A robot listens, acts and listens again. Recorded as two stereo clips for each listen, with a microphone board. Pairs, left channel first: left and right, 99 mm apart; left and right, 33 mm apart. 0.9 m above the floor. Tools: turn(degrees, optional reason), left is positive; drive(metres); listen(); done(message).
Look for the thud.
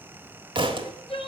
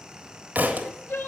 turn(degrees=-60, reason="The thud: about 60° right or 120° right.")
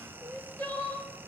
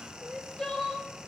listen()
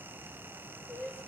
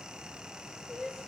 done("I heard a thud, but can't make it out now. It was about straight ahead or 60° right.")